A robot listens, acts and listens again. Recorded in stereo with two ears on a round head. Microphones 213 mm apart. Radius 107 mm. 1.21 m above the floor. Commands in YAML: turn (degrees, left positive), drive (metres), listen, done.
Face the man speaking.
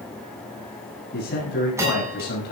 turn: 50
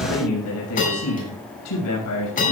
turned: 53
turn: 75
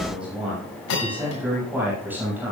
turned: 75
turn: -10
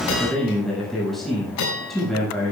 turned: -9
done: "Found it: a man speaking, straight ahead, over 4 m away."